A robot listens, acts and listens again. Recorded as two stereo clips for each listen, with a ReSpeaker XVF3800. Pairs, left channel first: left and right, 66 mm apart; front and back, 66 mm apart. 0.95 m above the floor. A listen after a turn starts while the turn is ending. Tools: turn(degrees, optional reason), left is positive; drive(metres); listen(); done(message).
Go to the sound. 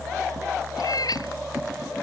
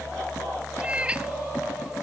turn(degrees=105, reason="The cat meowing: 105° left.")
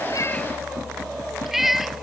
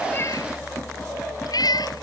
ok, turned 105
drive(metres=1.0)
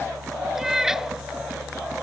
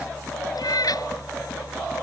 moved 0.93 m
drive(metres=1.0)
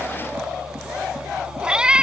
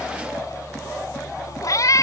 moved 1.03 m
turn(degrees=-15, reason="The cat meowing is now 15° right.")
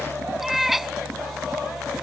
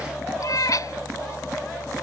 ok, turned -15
drive(metres=1.0)
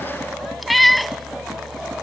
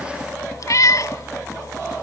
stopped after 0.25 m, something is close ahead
done("Arrived at the cat meowing, straight ahead.")